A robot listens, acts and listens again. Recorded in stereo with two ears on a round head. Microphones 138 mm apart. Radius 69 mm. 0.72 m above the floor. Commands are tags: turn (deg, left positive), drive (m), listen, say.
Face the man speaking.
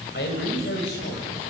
<turn deg="90"/>
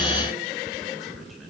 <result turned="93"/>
<say>Found it: a man speaking, straight ahead, over 4 m away.</say>